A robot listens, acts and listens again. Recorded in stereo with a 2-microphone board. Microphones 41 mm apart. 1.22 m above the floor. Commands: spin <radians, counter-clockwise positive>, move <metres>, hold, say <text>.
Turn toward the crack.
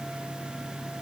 hold
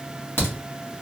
spin 1.22
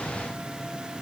hold
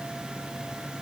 say I heard a crack, but can't make it out now. It was about straight ahead or 40° left.